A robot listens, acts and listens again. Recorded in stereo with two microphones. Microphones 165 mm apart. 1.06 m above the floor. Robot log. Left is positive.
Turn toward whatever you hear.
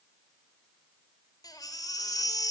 note: The baby crying: about 20° left or 160° left.
cmd yaw +20
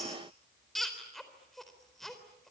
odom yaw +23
end: Found it: a baby crying, straight ahead, 2 to 4 m away.